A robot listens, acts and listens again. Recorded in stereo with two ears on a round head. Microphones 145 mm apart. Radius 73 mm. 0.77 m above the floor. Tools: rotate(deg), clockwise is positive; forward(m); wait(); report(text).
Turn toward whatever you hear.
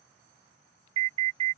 rotate(35)
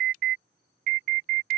rotate(105)
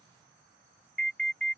report("Found it: an alarm, straight ahead.")